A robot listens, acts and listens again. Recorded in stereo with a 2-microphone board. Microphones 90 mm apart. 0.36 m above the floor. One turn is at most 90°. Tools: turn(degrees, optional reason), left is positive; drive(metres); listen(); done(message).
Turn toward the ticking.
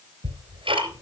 turn(degrees=-90)
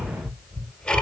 turn(degrees=15, reason="So it is at 15° left.")
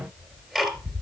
done("Found it: ticking, straight ahead.")